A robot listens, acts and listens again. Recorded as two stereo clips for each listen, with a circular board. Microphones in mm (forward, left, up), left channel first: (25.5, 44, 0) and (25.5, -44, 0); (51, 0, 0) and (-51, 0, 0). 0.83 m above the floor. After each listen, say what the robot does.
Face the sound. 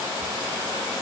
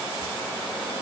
Keep listening.
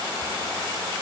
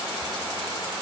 Keep listening.
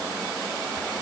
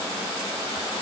I can't make out anything to turn to.